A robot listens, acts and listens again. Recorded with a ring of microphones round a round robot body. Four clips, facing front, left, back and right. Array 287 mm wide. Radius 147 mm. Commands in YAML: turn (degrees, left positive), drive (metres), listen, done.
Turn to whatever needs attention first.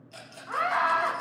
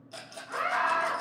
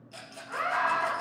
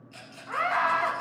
turn: -45
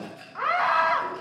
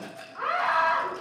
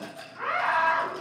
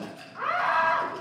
done: "Facing the scream, 2 to 4 m away."